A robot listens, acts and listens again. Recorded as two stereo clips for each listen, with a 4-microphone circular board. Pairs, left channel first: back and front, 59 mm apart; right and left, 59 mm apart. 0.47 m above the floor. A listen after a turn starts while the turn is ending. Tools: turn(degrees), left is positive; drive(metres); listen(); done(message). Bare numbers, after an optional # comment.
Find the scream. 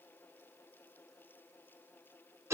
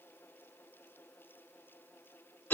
listen()
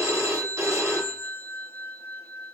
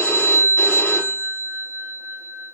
listen()
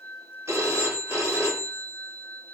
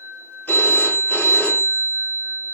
done("I can't make out a scream, only a phone ringing.")